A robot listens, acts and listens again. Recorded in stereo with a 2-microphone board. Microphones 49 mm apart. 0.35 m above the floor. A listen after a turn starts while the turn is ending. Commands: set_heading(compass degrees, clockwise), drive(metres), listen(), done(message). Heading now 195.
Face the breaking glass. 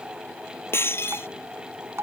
set_heading(140)
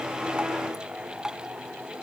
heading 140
listen()
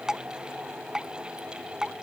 done("I heard breaking glass, but can't make it out now. It was about straight ahead or 70° left.")